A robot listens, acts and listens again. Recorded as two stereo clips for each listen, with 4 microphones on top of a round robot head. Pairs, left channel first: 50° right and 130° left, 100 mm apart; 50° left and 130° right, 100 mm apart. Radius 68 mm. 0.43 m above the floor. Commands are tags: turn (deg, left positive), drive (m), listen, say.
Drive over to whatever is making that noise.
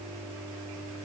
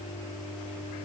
<listen/>
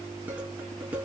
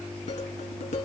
<turn deg="55"/>
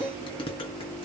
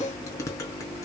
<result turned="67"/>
<turn deg="-10"/>
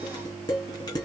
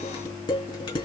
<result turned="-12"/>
<drive m="1.0"/>
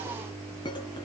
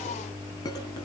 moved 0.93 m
<drive m="1.0"/>
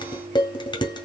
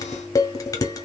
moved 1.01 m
<drive m="1.0"/>
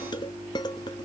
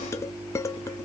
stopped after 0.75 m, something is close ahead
<turn deg="-10"/>
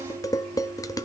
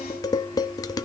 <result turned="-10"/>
<say>Arrived at the dishes clattering, straight ahead.</say>